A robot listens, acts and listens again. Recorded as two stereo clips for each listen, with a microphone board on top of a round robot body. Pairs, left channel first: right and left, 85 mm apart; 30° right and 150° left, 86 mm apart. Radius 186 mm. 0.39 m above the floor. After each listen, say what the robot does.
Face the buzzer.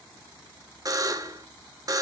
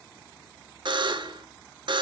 Turn 130° left.
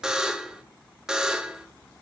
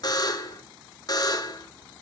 Found it: a buzzer, straight ahead.